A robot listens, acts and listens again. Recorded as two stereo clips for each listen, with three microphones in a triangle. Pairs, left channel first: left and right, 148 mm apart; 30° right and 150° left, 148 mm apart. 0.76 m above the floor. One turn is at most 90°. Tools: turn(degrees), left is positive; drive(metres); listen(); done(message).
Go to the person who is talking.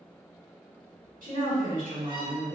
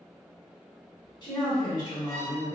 turn(degrees=-85)
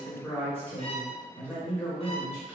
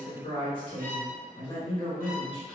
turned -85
turn(degrees=15)
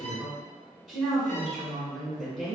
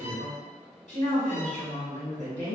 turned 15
drive(metres=1.0)
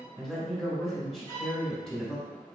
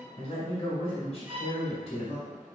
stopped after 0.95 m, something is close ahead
done("I am next to the woman speaking.")